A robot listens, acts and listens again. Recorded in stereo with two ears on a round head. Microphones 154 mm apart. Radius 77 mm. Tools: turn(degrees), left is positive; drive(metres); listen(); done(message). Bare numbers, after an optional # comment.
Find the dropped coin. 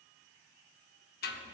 listen()
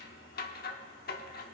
listen()
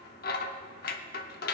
done("I can't make out a dropped coin, only scissors.")